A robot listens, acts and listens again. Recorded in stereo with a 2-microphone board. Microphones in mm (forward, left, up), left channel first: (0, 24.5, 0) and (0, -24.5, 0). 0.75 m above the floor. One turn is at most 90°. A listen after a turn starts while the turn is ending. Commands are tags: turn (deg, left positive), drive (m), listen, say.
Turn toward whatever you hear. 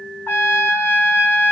<turn deg="45"/>
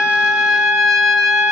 <say>Facing the trumpet, 1 to 2 m away.</say>